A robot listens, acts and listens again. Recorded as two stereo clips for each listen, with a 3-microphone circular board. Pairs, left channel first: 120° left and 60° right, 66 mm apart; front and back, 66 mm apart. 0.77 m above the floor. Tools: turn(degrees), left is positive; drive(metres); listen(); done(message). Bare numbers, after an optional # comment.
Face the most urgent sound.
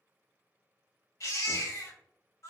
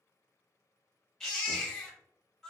# The baby crying: 85° left.
turn(85)
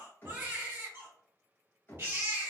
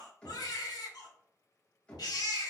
done("Found it: a baby crying, straight ahead, 1 to 2 m away.")